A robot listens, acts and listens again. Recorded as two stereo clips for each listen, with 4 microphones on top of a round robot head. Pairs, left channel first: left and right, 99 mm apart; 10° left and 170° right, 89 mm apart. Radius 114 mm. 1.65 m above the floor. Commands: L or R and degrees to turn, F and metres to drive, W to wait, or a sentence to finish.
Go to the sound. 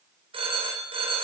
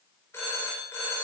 R60
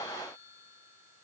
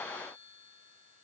W
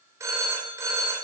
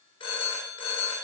R30
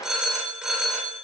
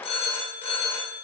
F1.0
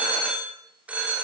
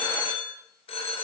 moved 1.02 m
R15
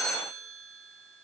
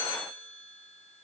F1.0
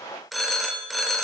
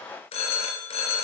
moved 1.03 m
F1.0
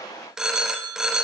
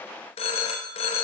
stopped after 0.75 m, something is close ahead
I am next to the phone ringing.